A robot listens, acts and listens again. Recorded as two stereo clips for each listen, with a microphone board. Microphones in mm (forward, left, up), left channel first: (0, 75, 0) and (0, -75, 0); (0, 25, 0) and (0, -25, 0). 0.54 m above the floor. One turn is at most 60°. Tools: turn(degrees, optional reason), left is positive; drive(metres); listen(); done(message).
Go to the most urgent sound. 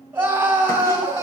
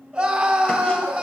turn(degrees=-15, reason="The scream: about 15° right or 165° right.")
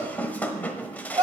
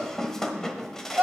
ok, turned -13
turn(degrees=-60, reason="So it is at 150° right.")
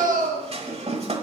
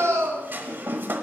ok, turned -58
turn(degrees=-60, reason="The scream is now 90° right.")
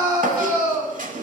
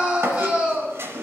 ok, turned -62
turn(degrees=-30, reason="The scream is now 30° right.")
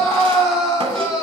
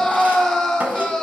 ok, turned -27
drive(metres=1.0)
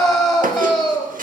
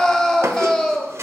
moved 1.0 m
drive(metres=1.0)
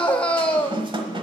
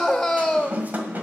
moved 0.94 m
turn(degrees=10, reason="The scream is now 10° left.")
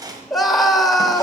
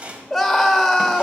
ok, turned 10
drive(metres=1.0)
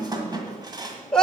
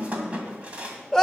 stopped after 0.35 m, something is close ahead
done("I am next to the scream.")